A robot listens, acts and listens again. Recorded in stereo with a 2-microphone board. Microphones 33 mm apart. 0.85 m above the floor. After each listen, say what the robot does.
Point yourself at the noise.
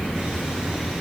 Keep listening.
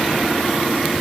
Keep listening.
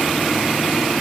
I can't make out anything to turn to.